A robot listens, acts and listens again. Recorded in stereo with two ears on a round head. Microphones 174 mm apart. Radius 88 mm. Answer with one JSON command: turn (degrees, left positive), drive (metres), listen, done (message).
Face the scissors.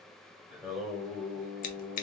{"turn": 45}
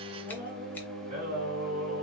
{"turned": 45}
{"listen": true}
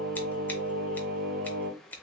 {"turn": 10}
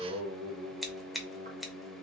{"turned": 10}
{"done": "Facing the scissors."}